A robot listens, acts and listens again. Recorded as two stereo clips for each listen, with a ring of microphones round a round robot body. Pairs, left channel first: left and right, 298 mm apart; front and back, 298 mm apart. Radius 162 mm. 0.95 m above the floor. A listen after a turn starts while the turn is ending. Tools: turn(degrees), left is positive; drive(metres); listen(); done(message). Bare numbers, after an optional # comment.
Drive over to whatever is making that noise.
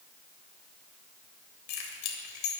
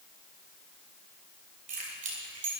# The keys jangling: 110° left.
turn(110)
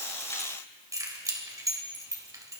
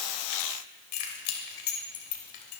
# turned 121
# The keys jangling is now 10° right.
turn(-10)
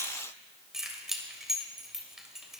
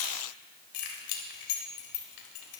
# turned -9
drive(1.0)
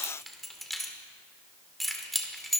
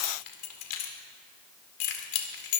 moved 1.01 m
drive(1.0)
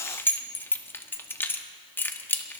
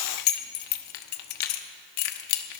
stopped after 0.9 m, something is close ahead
done("Arrived at the keys jangling, straight ahead.")